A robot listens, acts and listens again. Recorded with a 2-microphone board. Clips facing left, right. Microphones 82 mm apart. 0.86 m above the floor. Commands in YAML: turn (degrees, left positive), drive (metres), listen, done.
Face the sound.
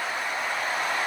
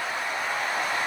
listen: true
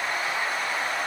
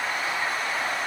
listen: true
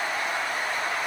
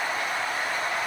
done: "I can't make out anything to turn to."